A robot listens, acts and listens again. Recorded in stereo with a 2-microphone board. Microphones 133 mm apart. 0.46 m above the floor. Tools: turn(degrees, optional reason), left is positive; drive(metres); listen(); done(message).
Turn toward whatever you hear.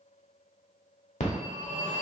turn(degrees=65, reason="The phone ringing: about 65° left or 115° left.")
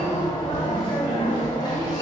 turn(degrees=35, reason="So it is at 35° left.")
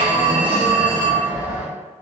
turn(degrees=-15, reason="The phone ringing is now 15° right.")
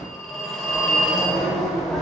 done("Found it: a phone ringing, straight ahead.")